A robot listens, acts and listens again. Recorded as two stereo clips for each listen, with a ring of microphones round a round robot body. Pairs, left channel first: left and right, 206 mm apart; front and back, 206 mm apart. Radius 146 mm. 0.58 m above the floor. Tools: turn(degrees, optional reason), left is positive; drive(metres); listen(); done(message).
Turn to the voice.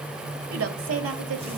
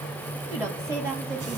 turn(degrees=-100, reason="The woman speaking: 100° right.")
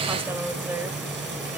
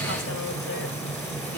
listen()
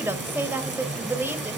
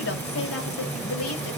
turn(degrees=-10, reason="The woman speaking is now 10° right.")
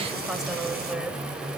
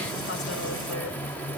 listen()
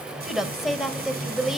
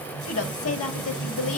done("Facing the woman speaking, 2 to 4 m away.")